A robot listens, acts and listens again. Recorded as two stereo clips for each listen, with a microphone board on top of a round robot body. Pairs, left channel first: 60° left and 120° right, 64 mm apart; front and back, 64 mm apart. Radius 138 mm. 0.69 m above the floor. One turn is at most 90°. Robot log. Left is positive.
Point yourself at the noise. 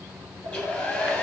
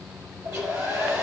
note: The hair dryer: 130° left.
cmd yaw +90
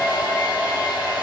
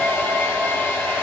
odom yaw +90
note: The hair dryer is now 55° left.
cmd yaw +55
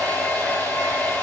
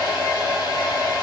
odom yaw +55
end: Facing the hair dryer, over 4 m away.